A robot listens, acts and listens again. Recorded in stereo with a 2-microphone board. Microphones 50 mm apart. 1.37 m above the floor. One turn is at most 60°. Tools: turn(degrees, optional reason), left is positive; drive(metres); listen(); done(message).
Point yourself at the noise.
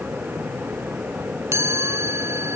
turn(degrees=-60, reason="The chime: about 70° right or 110° right.")
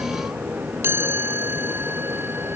turn(degrees=-50, reason="So it is at 50° right.")
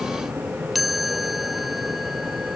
done("Found it: a chime, straight ahead.")